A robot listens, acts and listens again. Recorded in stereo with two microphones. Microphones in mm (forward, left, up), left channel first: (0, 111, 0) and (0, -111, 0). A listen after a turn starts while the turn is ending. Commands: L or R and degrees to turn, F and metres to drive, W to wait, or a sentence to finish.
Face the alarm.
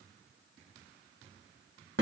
W
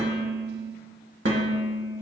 W
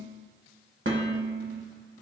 I can't make out an alarm to turn to.